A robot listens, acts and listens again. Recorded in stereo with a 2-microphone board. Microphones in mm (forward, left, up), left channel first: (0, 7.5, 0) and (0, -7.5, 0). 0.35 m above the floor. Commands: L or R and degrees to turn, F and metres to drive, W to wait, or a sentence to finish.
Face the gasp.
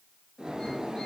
W
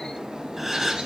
R20
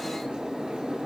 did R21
W
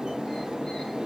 I heard a gasp, but can't make it out now. It was about straight ahead or 140° right.